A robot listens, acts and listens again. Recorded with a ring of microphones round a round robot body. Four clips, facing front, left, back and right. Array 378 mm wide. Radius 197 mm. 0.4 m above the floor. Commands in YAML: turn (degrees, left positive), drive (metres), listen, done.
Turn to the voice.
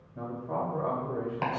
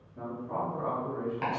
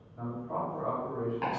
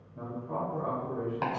turn: -15
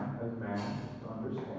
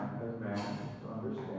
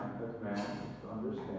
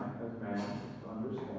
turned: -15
turn: -30
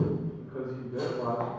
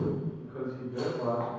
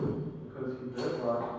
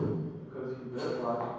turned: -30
turn: -25
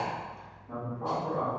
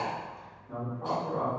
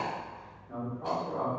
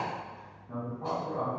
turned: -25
done: "Found it: a man speaking, straight ahead, 1 to 2 m away."